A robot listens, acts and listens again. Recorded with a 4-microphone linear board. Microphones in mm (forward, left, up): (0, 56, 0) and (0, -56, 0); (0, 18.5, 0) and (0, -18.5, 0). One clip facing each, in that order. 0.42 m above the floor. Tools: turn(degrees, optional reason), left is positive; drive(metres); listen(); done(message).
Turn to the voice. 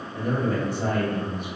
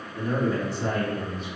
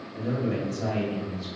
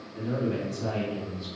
turn(degrees=60, reason="The man speaking: about 60° left or 120° left.")
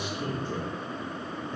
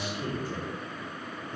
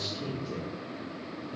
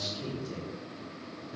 turn(degrees=30, reason="So it is at 30° left.")
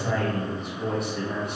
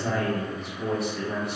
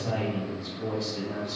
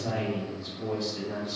done("Facing the man speaking, 1 to 2 m away.")